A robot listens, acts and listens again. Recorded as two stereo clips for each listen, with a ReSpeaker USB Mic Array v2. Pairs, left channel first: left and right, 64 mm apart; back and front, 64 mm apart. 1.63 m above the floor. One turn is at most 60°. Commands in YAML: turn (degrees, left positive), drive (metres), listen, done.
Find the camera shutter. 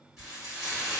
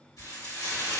listen: true
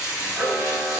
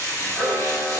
turn: 60
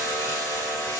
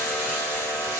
turn: 60
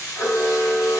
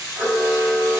turn: 30
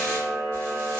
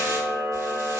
done: "Found it: a camera shutter, straight ahead."